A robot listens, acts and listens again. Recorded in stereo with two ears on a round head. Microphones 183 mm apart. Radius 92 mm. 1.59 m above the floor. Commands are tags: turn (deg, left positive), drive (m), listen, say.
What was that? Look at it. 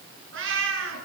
<turn deg="-70"/>
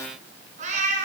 <turn deg="-35"/>
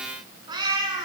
<turn deg="-20"/>
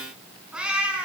<say>Found it: a cat meowing, straight ahead.</say>